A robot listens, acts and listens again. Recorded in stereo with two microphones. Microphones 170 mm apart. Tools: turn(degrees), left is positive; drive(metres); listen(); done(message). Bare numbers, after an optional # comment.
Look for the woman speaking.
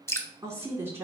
turn(-30)
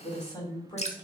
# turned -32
# So it is at 25° left.
turn(25)
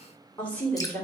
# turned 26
# The woman speaking is now 10° left.
turn(10)
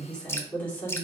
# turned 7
# The woman speaking is now 10° left.
turn(10)
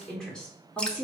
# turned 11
# The woman speaking is now 10° left.
turn(10)
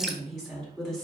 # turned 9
done("Facing the woman speaking.")